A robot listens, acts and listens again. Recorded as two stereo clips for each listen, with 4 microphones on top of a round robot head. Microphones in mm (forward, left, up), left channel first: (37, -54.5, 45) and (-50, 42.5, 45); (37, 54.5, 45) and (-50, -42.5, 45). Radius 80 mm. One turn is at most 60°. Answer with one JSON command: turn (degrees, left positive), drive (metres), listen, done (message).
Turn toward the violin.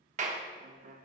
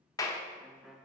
{"turn": 60}
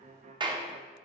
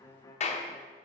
{"turn": 60}
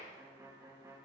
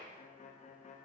{"turn": 60}
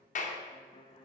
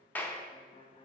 {"done": "Found it: a violin, straight ahead, under 1 m away."}